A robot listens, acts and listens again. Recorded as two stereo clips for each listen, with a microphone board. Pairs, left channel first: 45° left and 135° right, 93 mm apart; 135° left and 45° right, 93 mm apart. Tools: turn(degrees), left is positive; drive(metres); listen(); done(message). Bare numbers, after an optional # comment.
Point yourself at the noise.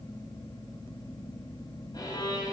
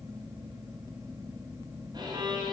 done("Found it: a violin, straight ahead.")